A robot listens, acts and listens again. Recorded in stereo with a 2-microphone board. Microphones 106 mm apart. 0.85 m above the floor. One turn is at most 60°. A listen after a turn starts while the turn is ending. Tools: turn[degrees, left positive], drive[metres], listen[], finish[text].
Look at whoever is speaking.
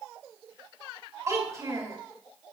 Thought: The child speaking: about 30° right or 150° right.
Action: turn[-30]
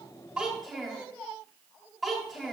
Action: finish[Found it: a child speaking, straight ahead, 2 to 4 m away.]